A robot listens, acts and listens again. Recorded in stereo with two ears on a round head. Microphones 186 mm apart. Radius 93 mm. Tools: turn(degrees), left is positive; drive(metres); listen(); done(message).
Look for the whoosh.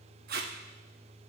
listen()
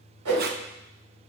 turn(degrees=-90)
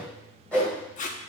done("Found it: a whoosh, straight ahead.")